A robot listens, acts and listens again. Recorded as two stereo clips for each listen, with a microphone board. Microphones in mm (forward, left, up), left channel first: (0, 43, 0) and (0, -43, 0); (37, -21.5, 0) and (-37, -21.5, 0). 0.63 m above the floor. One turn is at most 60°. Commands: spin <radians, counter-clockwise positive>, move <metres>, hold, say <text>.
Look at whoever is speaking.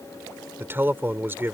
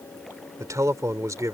spin -1.05
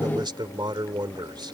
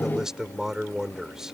spin -1.05
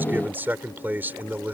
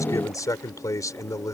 spin -0.44
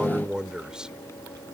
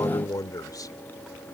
spin -0.17
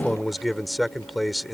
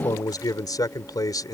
say Facing the man speaking.